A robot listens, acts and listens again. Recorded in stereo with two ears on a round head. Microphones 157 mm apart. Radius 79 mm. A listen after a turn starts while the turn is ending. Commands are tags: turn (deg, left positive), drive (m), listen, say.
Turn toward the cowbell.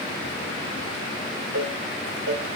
<turn deg="-90"/>
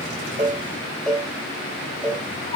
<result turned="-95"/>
<say>Found it: a cowbell, straight ahead.</say>